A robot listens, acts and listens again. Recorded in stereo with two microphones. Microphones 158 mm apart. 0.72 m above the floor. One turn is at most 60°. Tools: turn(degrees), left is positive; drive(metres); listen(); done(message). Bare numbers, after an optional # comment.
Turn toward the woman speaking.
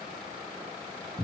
listen()
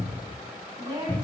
# The woman speaking: about 20° right or 160° right.
turn(-20)
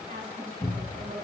listen()
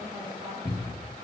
listen()
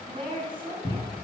# The woman speaking: about 30° right or 150° right.
turn(-30)
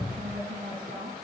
# So it is at 125° right.
turn(-60)
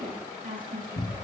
# The woman speaking is now 65° right.
turn(-60)
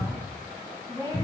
# The woman speaking is now 20° right.
turn(-20)
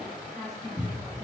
done("Found it: a woman speaking, straight ahead, over 4 m away.")